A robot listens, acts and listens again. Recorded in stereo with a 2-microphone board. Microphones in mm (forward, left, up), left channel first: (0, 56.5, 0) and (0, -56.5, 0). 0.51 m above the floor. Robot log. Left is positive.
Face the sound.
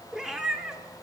cmd yaw -30
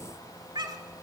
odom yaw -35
note: So it is at 140° right.
cmd yaw -140
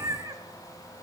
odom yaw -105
note: The cat meowing is now 30° right.
cmd yaw -30
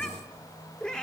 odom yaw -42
note: The cat meowing is now 10° left.
cmd yaw +10
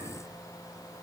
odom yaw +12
cmd idle
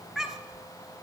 end: Found it: a cat meowing, straight ahead.